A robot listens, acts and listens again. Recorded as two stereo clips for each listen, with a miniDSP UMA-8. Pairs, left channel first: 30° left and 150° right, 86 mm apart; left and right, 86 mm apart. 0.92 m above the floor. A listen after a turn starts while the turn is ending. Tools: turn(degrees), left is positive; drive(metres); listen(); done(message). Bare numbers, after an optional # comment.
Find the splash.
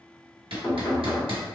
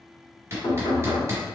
listen()
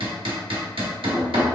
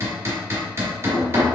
listen()
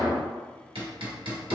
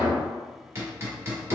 done("I can't make out a splash to turn to.")